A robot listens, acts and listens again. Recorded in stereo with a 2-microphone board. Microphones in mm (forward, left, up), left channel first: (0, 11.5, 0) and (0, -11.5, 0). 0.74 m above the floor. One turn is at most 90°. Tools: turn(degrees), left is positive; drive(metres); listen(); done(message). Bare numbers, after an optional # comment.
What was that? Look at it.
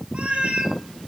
# The cat meowing: about 70° right or 110° right.
turn(-70)
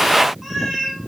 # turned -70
# So it is at 15° right.
turn(-15)
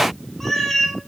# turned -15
done("Found it: a cat meowing, straight ahead.")